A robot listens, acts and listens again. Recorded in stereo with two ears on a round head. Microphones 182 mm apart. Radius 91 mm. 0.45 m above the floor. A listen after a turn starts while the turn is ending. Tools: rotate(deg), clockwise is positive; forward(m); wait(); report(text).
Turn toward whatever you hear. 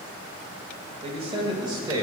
rotate(20)
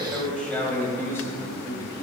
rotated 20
rotate(-20)
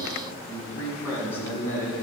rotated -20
rotate(-15)
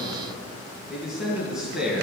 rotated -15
report("Found it: a man speaking, straight ahead, 2 to 4 m away.")